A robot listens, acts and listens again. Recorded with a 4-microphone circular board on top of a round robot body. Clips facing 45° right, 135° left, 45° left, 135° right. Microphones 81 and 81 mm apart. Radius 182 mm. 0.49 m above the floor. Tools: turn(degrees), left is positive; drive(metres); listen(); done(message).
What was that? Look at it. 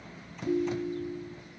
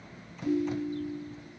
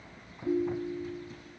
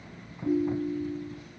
turn(degrees=-160)
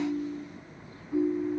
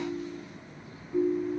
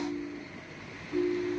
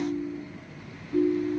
done("Found it: a ringtone, straight ahead, 2 to 4 m away.")